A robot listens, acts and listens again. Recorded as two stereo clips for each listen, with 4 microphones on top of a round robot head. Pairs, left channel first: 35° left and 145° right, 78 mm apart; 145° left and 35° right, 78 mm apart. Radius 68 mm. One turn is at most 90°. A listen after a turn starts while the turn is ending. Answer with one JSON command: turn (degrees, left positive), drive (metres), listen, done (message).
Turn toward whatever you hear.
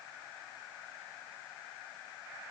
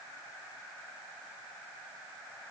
{"listen": true}
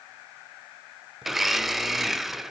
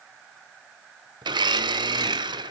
{"turn": -60}
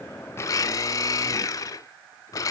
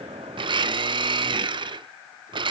{"turn": -15}
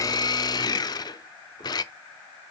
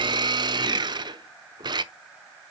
{"done": "Found it: a blender, straight ahead, under 1 m away."}